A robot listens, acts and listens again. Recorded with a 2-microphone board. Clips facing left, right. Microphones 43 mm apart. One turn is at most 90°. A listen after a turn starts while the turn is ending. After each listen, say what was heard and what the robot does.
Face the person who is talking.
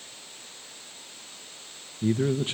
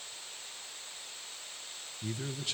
The man speaking: about 30° left or 150° left. Turn 30° left.
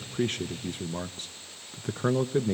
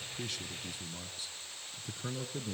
So it is at 120° left. Turn 90° left.
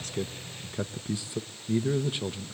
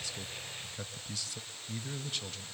The man speaking is now 25° left. Turn 25° left.
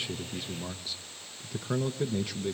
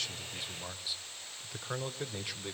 Facing the man speaking.